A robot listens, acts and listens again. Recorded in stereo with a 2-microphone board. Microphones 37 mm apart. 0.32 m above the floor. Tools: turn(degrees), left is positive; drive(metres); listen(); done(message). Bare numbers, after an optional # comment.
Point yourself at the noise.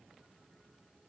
listen()
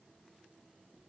listen()
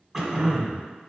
turn(-30)
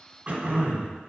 # So it is at 140° right.
turn(-140)
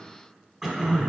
done("Facing the throat clearing.")